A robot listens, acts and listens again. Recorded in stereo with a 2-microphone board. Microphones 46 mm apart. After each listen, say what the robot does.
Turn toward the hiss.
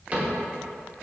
Keep listening.
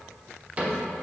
Keep listening.
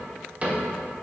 I can't make out a hiss to turn to.